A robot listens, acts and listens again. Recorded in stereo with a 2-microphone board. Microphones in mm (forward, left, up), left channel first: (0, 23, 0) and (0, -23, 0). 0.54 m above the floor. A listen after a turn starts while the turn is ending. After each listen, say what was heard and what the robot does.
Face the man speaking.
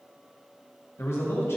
The man speaking: about 70° left or 110° left. Turn 70° left.
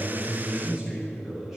Facing the man speaking.